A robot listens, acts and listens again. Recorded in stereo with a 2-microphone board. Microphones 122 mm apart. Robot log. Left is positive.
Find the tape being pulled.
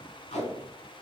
note: The tape being pulled: about 75° left or 105° left.
cmd yaw +75
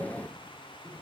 cmd idle
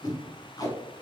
note: So it is at 30° left.
cmd yaw +30
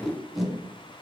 end: Facing the tape being pulled.